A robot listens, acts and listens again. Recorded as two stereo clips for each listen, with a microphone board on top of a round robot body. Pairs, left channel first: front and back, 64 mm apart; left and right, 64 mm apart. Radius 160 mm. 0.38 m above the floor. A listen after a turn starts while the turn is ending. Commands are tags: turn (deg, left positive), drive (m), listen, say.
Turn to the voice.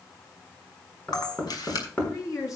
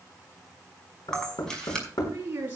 <turn deg="-30"/>
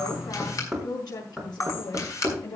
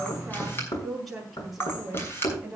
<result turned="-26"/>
<say>Facing the woman speaking, over 4 m away.</say>